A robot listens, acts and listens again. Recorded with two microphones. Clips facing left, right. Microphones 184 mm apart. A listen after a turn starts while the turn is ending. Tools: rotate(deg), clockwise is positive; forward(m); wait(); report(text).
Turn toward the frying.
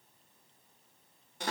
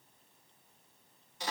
wait()
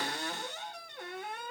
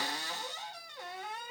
wait()
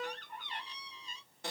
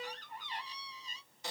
report("I can't make out frying to turn to.")